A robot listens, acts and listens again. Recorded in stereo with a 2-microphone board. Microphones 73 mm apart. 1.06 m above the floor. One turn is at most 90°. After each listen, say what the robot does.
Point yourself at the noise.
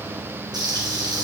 Turn 90° right.
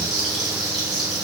Facing the frying, 2 to 4 m away.